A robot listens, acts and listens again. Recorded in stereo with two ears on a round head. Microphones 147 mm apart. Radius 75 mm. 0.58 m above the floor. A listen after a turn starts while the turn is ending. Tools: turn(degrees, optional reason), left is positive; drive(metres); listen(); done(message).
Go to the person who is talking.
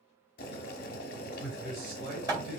turn(degrees=-55, reason="The man speaking: about 55° right or 125° right.")
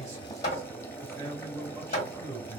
turn(degrees=-15, reason="So it is at 15° right.")
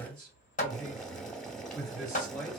drive(metres=1.0)
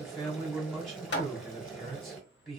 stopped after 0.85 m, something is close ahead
done("I am next to the man speaking.")